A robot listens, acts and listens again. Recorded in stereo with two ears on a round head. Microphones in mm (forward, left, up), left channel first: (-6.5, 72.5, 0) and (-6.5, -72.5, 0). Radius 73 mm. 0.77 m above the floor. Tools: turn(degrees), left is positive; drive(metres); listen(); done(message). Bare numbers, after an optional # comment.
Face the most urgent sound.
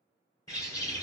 listen()
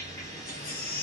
# The baby crying: about 60° left or 120° left.
turn(60)
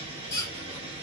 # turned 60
# So it is at 20° left.
turn(20)
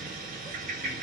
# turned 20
listen()
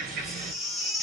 done("Facing the baby crying.")